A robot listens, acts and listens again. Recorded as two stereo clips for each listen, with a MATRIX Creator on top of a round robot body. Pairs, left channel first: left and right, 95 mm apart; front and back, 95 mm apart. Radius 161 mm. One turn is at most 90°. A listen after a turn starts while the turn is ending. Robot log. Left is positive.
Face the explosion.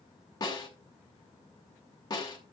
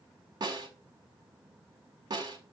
cmd idle
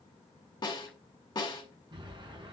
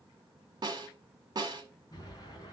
note: The explosion: 50° right.
cmd yaw -50
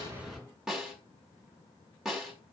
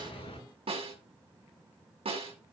end: Facing the explosion, over 4 m away.